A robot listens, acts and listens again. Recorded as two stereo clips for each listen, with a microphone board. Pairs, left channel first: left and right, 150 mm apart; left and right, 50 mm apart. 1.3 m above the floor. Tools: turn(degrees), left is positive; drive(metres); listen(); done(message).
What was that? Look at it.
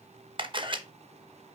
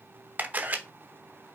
turn(degrees=-35)
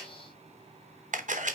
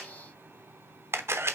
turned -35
turn(degrees=-105)
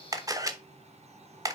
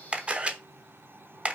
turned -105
turn(degrees=-25)
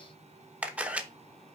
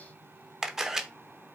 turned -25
turn(degrees=-10)
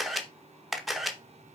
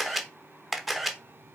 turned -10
done("Found it: a camera shutter, straight ahead, under 1 m away.")